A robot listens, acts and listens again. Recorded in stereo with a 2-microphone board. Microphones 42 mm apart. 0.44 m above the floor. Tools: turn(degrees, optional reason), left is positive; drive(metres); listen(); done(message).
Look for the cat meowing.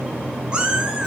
turn(degrees=-25, reason="The cat meowing: about 25° right or 155° right.")
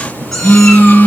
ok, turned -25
listen()
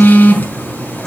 listen()
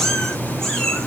turn(degrees=10, reason="So it is at 10° left.")
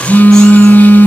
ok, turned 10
listen()
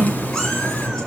listen()
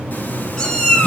turn(degrees=10, reason="The cat meowing is now 10° left.")
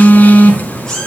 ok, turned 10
done("Found it: a cat meowing, straight ahead.")